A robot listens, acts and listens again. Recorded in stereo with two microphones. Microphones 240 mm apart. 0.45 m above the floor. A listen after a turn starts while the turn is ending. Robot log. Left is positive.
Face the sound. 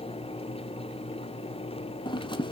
note: The scissors: about 20° left or 160° left.
cmd yaw +20
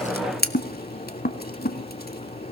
note: So it is at 140° left.
cmd yaw +140
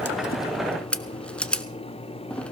end: Found it: scissors, straight ahead, under 1 m away.